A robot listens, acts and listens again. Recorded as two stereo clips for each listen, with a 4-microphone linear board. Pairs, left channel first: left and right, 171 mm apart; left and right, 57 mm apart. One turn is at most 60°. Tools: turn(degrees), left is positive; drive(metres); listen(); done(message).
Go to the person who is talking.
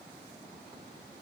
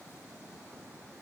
listen()
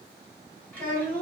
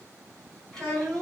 turn(degrees=30)
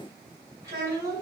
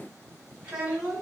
turn(degrees=-20)
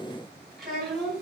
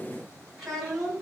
drive(metres=1.0)
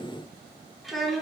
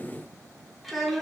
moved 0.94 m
drive(metres=1.0)
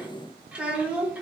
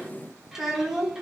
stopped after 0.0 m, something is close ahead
done("Arrived at the child speaking, straight ahead.")